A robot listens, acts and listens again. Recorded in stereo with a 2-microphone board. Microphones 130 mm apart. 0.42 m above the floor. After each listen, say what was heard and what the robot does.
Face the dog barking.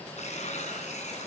Keep listening.
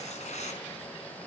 Keep listening.
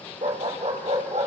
The dog barking: about 60° right or 120° right. Turn 60° right.
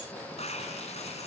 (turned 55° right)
Keep listening.
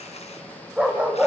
So it is at 10° right. Turn 10° right.
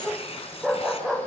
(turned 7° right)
Facing the dog barking.